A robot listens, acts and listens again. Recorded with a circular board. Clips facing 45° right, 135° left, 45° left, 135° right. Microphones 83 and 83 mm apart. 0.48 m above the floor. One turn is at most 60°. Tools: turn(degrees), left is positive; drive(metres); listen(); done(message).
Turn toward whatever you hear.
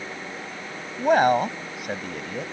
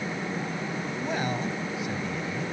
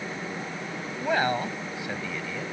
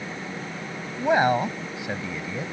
turn(degrees=-60)
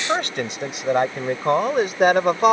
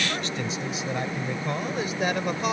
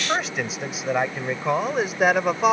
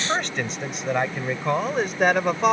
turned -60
turn(degrees=-40)
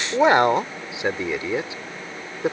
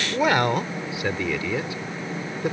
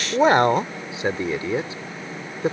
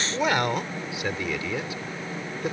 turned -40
turn(degrees=10)
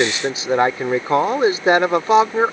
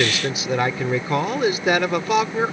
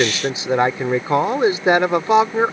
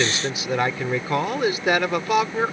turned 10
done("Found it: a man speaking, straight ahead.")